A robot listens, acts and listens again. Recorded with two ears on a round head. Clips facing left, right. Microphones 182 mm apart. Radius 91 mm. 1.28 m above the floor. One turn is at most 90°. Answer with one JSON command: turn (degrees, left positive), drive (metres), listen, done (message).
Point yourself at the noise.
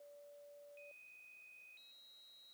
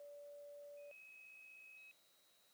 {"listen": true}
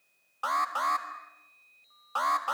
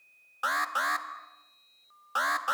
{"turn": -15}
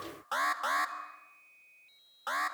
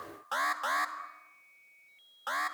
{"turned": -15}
{"done": "Found it: an alarm, straight ahead."}